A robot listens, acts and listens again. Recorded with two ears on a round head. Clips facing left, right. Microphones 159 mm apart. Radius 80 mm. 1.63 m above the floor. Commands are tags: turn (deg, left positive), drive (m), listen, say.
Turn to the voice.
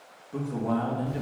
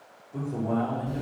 <turn deg="90"/>
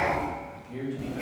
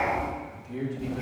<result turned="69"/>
<turn deg="10"/>
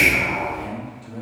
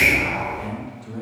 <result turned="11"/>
<say>Found it: a man speaking, straight ahead, 2 to 4 m away.</say>